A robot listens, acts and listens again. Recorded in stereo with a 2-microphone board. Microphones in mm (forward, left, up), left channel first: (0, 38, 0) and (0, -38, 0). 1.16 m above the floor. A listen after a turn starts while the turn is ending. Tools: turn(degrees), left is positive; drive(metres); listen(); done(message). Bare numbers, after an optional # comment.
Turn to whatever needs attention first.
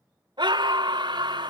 turn(-90)
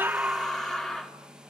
done("Facing the scream, 2 to 4 m away.")